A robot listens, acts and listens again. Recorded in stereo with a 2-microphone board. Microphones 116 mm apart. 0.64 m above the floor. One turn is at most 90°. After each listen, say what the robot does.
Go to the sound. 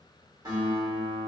Turn 35° right.
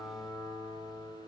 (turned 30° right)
Drive 1.0 m forward.
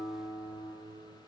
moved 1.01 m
Turn 15° right.
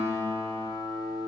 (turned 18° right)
Drive 1.0 m forward.
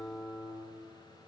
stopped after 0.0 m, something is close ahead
Arrived at the guitar, straight ahead.